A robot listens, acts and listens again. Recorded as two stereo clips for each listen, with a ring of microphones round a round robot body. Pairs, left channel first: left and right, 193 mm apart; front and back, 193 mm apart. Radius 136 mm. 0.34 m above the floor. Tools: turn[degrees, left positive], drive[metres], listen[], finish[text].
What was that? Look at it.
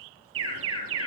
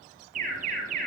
Thought: The alarm: 115° right.
Action: turn[-115]
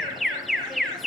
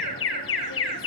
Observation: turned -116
Action: finish[Facing the alarm, over 4 m away.]